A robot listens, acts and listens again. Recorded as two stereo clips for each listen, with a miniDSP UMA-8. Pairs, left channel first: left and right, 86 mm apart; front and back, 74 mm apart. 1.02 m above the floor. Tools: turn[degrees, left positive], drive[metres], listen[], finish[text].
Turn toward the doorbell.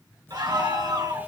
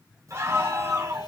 Thought: The doorbell: 150° left.
Action: turn[150]
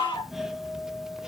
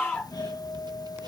Action: finish[Facing the doorbell.]